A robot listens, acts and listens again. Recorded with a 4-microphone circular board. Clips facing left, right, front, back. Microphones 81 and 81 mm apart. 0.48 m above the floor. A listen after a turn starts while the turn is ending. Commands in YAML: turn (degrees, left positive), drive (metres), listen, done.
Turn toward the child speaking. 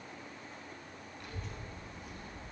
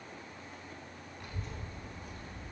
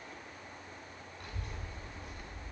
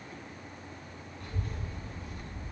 done: "Facing the child speaking."